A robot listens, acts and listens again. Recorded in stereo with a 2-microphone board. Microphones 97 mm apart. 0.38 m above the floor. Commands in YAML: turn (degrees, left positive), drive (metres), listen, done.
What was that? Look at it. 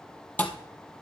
turn: 15
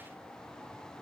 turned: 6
listen: true
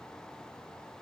done: "I heard a thud, but can't make it out now. It was about 10° left or 155° left."